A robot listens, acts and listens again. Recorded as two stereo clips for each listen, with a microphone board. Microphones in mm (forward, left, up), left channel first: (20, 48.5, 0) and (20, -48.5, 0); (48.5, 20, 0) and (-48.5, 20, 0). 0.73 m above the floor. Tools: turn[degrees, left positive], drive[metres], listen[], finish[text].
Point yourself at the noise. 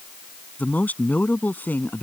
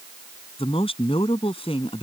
Thought: The man speaking: 20° left.
Action: turn[20]
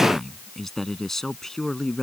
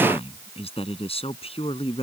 Action: finish[Found it: a man speaking, straight ahead.]